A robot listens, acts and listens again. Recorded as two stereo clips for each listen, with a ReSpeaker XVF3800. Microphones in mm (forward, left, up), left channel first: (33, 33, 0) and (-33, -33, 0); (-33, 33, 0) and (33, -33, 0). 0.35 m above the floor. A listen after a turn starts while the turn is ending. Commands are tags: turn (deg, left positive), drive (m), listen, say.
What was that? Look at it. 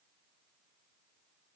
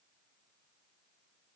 <listen/>
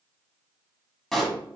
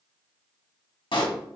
<turn deg="130"/>
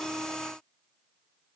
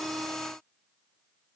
<say>Facing where the pop came from. I can't hear it now.</say>